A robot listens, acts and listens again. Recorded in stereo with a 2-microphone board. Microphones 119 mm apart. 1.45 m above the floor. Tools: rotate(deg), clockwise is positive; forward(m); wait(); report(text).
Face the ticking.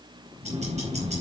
rotate(70)
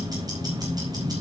rotate(35)
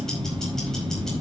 report("Found it: ticking, straight ahead.")